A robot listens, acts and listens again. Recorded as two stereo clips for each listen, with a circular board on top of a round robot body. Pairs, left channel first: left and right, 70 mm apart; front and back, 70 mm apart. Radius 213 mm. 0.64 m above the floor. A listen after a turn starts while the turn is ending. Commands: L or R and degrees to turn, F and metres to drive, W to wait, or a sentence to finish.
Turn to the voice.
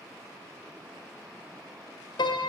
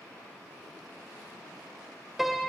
W
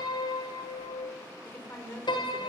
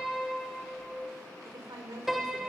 L155
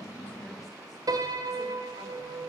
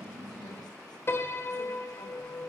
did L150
W
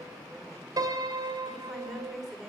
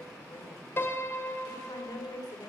Facing the woman speaking.